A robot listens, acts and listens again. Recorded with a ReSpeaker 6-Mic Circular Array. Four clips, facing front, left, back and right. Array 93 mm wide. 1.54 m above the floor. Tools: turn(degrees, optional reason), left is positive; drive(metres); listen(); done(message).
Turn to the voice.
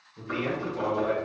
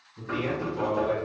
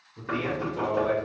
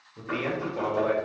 turn(degrees=-100, reason="The man speaking: 100° right.")
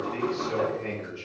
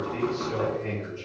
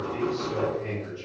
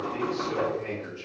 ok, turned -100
turn(degrees=-10, reason="The man speaking is now 10° right.")
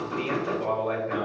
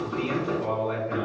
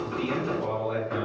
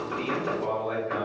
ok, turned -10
done("Facing the man speaking.")